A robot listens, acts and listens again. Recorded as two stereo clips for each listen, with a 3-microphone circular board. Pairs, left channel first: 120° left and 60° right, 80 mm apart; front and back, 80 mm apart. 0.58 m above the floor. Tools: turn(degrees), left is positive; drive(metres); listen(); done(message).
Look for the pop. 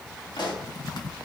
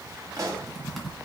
turn(degrees=140)
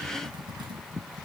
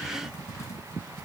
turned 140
done("I heard a pop from this way, but can't make it out now.")